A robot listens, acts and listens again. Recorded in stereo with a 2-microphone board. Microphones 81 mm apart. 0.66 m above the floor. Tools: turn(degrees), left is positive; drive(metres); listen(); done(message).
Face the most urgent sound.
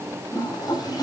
listen()
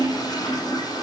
listen()
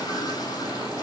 done("I can't make out anything urgent to turn to.")